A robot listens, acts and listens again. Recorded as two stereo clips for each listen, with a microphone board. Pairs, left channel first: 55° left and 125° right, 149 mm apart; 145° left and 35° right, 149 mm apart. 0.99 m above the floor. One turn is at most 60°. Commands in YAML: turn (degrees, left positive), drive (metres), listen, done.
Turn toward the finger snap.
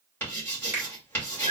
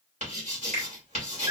turn: -50
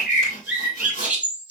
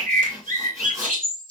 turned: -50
listen: true
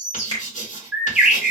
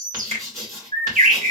done: "Facing the finger snap, 1 to 2 m away."